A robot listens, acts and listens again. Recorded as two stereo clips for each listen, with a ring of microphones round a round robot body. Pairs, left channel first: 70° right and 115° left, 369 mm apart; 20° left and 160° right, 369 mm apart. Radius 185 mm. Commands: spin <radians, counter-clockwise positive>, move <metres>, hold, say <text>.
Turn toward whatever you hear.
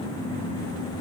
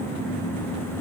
hold
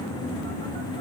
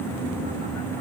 hold
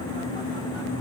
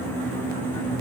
say I can't make out anything.